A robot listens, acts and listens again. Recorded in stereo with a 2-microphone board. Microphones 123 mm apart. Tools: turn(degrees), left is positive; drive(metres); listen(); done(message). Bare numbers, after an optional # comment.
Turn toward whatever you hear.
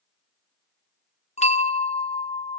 # The bell: about 65° left or 115° left.
turn(65)
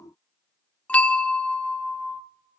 # So it is at 10° left.
turn(10)
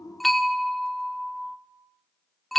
done("Found it: a bell, straight ahead, 1 to 2 m away.")